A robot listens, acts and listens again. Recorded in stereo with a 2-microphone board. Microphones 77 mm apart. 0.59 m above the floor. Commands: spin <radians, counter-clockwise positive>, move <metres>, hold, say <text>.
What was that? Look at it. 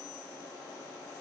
hold
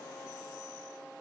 hold
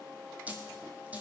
spin -0.35
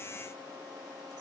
hold
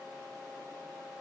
say I heard a dropped coin, but can't make it out now. It was about straight ahead or 140° right.